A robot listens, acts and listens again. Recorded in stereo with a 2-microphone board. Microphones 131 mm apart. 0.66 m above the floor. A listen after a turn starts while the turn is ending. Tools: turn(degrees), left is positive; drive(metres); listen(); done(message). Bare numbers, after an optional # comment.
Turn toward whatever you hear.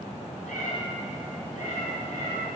# The cat meowing: about 65° left or 115° left.
turn(65)
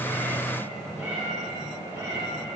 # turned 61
# So it is at 25° right.
turn(-25)
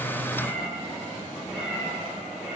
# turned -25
# The cat meowing is now 10° right.
turn(-10)
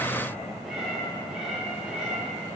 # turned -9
done("Facing the cat meowing, 2 to 4 m away.")